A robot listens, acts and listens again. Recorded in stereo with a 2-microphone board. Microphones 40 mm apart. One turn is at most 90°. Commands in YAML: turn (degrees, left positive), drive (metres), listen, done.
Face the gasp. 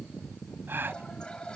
turn: -70
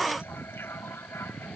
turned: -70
listen: true
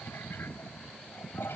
done: "I heard a gasp, but can't make it out now. It was about straight ahead or 40° right."